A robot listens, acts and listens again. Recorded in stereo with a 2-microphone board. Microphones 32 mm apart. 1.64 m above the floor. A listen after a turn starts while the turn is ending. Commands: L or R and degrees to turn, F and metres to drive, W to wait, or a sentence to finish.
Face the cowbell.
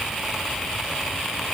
W
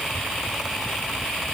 W
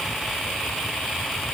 I can't make out a cowbell.